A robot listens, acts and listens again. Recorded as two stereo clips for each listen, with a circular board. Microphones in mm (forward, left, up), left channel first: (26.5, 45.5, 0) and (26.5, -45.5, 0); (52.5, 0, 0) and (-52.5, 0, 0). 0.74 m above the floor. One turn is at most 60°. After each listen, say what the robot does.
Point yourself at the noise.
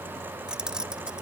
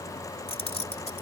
Turn 10° right.
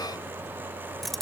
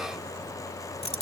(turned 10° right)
Facing the keys jangling.